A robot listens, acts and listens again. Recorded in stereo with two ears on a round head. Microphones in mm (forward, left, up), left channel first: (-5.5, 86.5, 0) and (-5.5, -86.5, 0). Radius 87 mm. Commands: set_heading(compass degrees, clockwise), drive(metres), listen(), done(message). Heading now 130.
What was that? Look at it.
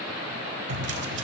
set_heading(195)
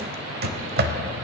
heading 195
set_heading(250)
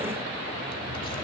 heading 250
listen()
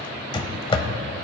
set_heading(225)
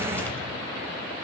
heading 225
listen()
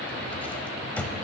set_heading(215)
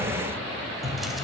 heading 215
done("Facing the drawer.")